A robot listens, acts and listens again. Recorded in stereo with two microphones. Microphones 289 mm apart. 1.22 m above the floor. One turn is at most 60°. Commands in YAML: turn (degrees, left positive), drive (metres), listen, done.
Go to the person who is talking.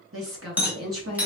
turn: -50
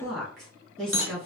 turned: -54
drive: 1.0
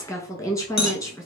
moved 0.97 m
turn: 10
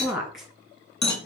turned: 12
drive: 1.0
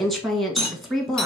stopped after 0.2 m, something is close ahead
done: "Arrived at the woman speaking, straight ahead."